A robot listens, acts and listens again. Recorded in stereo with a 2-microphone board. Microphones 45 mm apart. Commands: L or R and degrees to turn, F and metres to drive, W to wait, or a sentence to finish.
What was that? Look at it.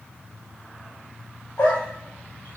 L65
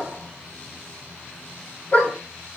L35
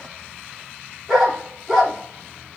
Facing the dog barking, over 4 m away.